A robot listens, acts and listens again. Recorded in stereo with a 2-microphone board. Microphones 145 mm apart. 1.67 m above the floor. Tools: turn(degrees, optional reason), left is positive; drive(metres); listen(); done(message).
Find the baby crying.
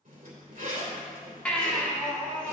turn(degrees=30)
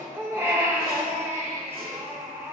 turn(degrees=-20, reason="So it is at 20° right.")
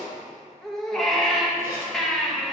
done("Facing the baby crying, 1 to 2 m away.")